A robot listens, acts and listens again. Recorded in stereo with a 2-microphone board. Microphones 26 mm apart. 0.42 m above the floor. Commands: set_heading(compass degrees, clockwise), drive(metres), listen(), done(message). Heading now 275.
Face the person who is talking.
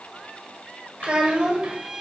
set_heading(325)
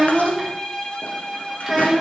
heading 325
set_heading(335)
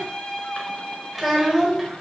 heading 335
done("Facing the child speaking, 1 to 2 m away.")